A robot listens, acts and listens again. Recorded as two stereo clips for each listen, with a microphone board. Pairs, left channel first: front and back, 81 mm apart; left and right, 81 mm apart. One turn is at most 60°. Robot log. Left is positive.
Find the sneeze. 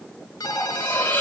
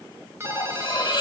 cmd idle
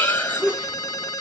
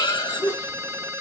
note: The sneeze: 100° left.
cmd yaw +60
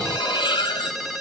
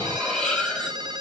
note: Nothing new. It was at 40° left.
cmd yaw +40
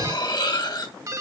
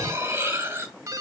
end: Facing where the sneeze came from. I can't hear it now.